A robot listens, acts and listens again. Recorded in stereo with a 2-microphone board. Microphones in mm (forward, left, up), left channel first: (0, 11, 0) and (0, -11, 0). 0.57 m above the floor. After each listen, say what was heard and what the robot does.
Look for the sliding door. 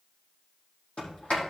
The sliding door: about 60° left or 120° left. Turn 60° left.
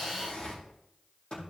So it is at 65° left. Turn 65° left.
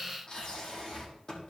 The sliding door is now 30° left. Turn 30° left.
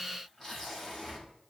Found it: a sliding door, straight ahead.